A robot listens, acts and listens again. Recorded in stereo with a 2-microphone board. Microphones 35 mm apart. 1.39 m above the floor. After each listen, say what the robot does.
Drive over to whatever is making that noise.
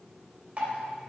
Turn 40° right.
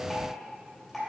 Drive 1.0 m forward.
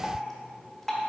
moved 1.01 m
Turn 10° left.
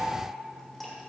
Drive 1.0 m forward.
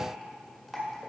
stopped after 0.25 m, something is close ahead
Arrived at the dripping, straight ahead.